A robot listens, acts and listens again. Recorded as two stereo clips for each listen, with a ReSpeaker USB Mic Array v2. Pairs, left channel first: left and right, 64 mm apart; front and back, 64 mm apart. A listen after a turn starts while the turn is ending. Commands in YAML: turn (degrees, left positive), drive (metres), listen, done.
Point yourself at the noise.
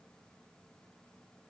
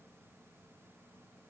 listen: true
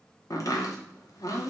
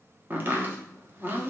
turn: 120
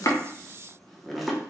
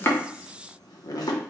done: "Facing the chopping, 1 to 2 m away."